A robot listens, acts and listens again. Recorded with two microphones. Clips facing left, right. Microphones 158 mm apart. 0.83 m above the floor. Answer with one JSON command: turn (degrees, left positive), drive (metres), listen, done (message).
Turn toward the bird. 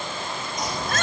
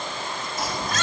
{"turn": -30}
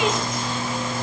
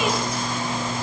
{"turn": -145}
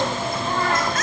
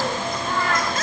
{"turn": 30}
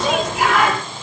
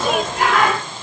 {"done": "Facing the bird."}